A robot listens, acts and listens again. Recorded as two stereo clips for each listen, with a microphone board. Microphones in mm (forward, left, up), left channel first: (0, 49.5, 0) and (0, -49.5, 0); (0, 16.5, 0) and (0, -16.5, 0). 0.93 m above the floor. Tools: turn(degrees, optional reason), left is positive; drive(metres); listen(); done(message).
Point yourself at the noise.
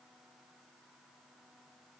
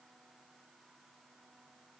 listen()
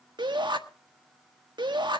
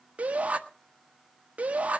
turn(degrees=-50, reason="The shout: about 50° right or 130° right.")
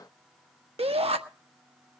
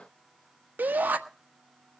turn(degrees=-80, reason="So it is at 80° right.")
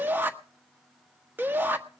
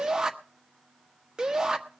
turn(degrees=-20, reason="The shout is now 20° right.")
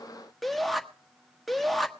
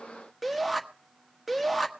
done("Found it: a shout, straight ahead, 1 to 2 m away.")